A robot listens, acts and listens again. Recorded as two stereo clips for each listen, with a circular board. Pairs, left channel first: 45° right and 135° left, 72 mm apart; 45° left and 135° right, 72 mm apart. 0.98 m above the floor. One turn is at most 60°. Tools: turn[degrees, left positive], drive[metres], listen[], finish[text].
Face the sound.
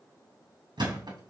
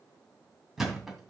Thought: The thud: 140° left.
Action: turn[60]
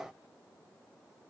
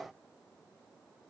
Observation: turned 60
Thought: Nothing new. It was at 80° left.
Action: turn[60]
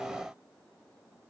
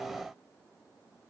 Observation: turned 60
Thought: Nothing new. It was at 20° left.
Action: turn[20]
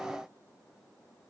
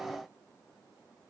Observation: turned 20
Action: finish[Facing where the thud came from. I can't hear it now.]